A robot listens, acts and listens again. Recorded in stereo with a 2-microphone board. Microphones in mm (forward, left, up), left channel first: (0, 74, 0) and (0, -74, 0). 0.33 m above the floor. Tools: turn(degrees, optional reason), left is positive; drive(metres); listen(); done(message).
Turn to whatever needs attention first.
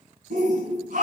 turn(degrees=-70, reason="The shout: about 70° right or 110° right.")
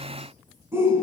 turn(degrees=-20, reason="So it is at 20° right.")
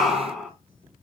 done("Facing the shout, 2 to 4 m away.")